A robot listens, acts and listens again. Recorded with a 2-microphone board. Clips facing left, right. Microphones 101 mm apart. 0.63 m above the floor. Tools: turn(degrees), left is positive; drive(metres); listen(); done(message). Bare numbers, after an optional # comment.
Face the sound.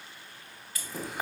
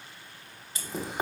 # The chewing: about 25° right or 155° right.
turn(-25)
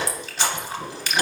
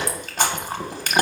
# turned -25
# So it is at 130° right.
turn(-130)
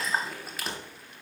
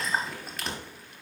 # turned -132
done("Facing the chewing, under 1 m away.")